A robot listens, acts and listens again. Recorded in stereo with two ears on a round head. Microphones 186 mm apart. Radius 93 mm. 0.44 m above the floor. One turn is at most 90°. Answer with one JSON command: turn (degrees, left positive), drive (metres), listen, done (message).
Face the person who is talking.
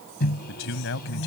{"turn": 65}
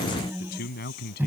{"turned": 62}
{"turn": 50}
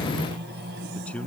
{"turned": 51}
{"done": "Facing the man speaking."}